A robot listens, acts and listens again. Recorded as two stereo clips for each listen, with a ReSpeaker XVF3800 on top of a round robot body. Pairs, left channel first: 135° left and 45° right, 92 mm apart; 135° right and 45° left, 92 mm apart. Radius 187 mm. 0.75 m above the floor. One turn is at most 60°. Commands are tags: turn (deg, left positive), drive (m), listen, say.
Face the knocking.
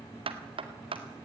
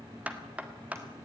<turn deg="-30"/>
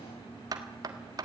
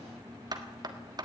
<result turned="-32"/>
<say>Facing the knocking, 2 to 4 m away.</say>